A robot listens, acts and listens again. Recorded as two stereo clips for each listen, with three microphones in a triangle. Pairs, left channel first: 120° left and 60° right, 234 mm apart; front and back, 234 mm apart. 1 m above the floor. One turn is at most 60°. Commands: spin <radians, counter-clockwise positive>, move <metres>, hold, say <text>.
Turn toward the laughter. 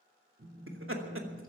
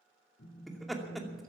spin -1.05
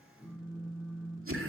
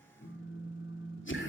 spin -0.61
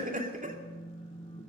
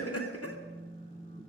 say Found it: laughter, straight ahead.